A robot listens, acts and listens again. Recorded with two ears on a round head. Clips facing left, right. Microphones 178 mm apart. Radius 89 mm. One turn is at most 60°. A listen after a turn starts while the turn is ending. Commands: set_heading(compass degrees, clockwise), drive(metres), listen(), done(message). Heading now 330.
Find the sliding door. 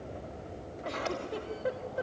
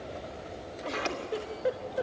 set_heading(30)
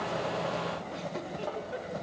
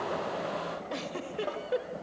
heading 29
set_heading(59)
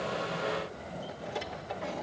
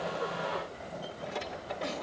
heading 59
done("Facing the sliding door.")